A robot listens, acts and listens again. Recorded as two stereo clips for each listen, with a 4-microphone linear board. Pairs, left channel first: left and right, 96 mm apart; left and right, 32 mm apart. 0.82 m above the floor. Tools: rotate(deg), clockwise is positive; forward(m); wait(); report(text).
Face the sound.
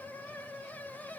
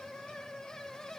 wait()
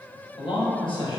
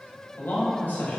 rotate(-60)
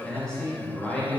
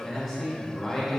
rotate(-10)
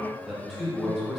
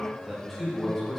report("Found it: a man speaking, straight ahead, under 1 m away.")